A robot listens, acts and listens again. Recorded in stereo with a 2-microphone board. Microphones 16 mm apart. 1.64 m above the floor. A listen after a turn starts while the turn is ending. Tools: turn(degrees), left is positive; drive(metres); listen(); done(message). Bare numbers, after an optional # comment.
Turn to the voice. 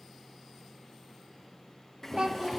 # The child speaking: about 55° right or 125° right.
turn(-55)
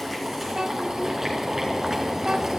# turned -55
listen()
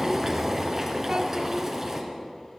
listen()
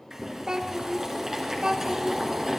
# So it is at 60° right.
turn(-60)
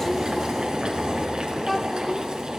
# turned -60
listen()
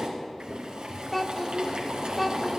done("Found it: a child speaking, straight ahead.")